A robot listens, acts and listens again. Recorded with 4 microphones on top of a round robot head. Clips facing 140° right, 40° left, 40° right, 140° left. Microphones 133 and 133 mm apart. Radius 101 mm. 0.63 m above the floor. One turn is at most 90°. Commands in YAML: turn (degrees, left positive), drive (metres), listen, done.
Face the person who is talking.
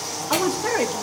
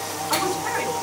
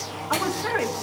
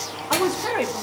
turn: -90
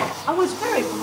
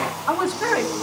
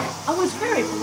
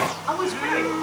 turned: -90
turn: -70
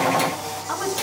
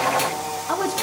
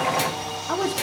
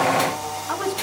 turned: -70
done: "Found it: a woman speaking, straight ahead, 1 to 2 m away."